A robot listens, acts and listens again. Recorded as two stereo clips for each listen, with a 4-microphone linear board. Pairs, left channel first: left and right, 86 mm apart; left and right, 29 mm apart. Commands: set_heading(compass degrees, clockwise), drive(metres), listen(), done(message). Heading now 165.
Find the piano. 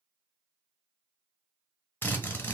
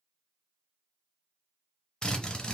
listen()
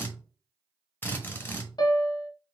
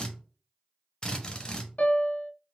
set_heading(110)
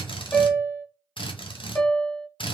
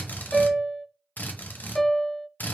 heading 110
set_heading(90)
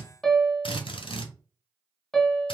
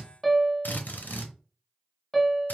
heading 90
done("Found it: a piano, straight ahead.")